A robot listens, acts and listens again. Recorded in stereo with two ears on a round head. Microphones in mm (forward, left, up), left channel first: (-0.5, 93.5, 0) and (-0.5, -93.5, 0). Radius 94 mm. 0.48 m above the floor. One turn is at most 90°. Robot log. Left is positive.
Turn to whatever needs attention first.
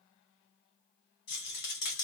cmd idle
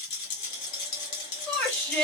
cmd yaw +30
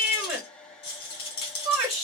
note: So it is at 20° right.
cmd yaw -20
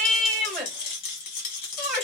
end: Found it: a shout, straight ahead, 1 to 2 m away.